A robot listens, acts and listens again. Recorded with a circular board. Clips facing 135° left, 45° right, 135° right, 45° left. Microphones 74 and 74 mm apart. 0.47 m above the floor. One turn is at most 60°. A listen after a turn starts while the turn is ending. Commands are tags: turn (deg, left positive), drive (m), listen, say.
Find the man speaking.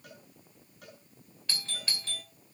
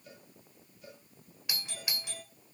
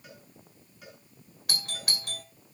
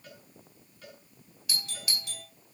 <listen/>
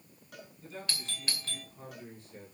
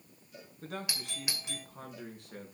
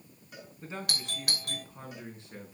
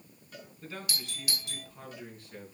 <turn deg="-60"/>
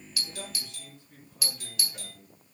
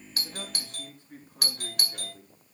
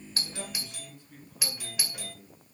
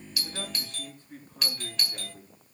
<say>Facing the man speaking.</say>